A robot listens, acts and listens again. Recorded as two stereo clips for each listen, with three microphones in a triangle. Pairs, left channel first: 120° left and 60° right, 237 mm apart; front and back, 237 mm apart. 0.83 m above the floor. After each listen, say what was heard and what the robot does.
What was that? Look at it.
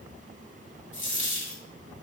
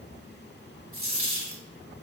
The dropped coin: 155° left. Turn 155° left.
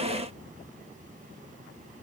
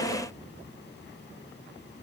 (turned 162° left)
Facing where the dropped coin came from. I can't hear it now.